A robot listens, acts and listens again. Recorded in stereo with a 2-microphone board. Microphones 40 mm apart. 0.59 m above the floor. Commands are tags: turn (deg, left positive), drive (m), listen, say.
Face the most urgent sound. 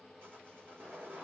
<listen/>
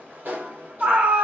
<turn deg="-35"/>
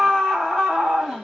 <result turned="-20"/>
<turn deg="-20"/>
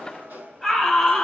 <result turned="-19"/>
<say>Found it: a scream, straight ahead.</say>